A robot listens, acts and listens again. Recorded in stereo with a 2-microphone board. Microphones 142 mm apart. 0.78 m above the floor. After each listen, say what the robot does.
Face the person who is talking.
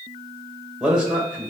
Turn 30° right.
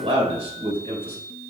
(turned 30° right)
Turn 140° right.
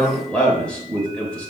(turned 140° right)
Facing the man speaking, 2 to 4 m away.